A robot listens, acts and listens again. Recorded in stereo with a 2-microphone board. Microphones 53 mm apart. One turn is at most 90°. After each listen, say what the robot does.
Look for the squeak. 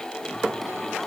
Keep listening.
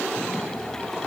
Keep listening.
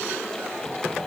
I can't make out a squeak, only singing.